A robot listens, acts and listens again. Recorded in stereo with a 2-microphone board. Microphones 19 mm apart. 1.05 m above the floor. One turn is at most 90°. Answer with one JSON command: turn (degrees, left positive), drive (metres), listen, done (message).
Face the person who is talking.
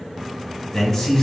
{"turn": 25}
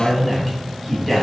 {"done": "Found it: a man speaking, straight ahead."}